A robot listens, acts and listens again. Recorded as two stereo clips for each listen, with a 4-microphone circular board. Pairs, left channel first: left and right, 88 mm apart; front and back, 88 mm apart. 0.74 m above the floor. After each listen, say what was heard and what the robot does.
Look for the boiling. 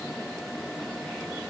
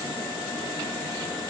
Keep listening.
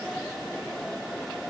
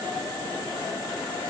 Keep listening.
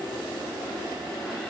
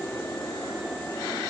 I can't make out boiling.